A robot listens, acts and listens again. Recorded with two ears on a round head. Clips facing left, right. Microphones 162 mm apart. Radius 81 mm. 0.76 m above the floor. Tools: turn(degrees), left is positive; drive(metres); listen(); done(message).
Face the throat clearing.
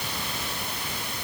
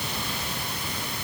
listen()
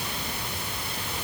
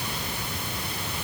listen()
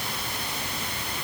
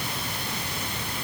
done("I can't make out throat clearing to turn to.")